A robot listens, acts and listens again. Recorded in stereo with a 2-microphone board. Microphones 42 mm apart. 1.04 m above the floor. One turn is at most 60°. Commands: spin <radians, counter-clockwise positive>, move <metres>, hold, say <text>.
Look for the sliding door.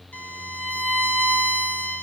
hold
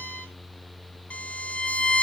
hold
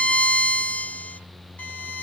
say I can't make out a sliding door, only a violin.